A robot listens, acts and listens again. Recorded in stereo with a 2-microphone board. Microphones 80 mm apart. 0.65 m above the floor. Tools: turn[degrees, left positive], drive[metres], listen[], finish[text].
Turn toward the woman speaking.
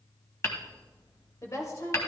Thought: The woman speaking: about 40° left or 140° left.
Action: turn[40]
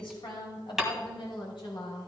Thought: So it is at 105° left.
Action: turn[105]
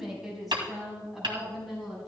Action: finish[Facing the woman speaking, over 4 m away.]